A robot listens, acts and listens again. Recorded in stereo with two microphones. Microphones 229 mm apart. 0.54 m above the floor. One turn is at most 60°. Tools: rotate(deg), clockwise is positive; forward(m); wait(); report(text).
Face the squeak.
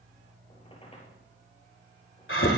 rotate(-25)
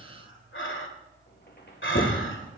rotate(-60)
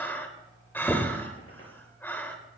rotate(-60)
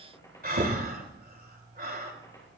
rotate(-15)
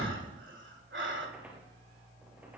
report("Found it: a squeak, straight ahead, over 4 m away.")